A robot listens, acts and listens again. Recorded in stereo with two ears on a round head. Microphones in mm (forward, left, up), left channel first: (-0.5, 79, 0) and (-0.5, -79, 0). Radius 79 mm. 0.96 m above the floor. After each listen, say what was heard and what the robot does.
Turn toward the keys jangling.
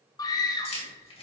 The keys jangling: about 35° left or 145° left. Turn 35° left.
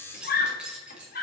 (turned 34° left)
Found it: keys jangling, straight ahead.